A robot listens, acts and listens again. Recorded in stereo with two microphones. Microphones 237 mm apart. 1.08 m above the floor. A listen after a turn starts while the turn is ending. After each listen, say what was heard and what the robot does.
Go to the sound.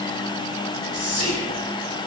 The whispering: about 65° right or 115° right. Turn 65° right.
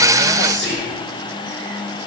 So it is at 50° right. Turn 50° right.
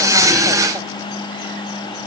Keep listening.
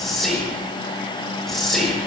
Drive 1.0 m forward.
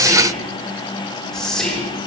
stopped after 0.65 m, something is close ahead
Blocked. The whispering is further on, straight ahead.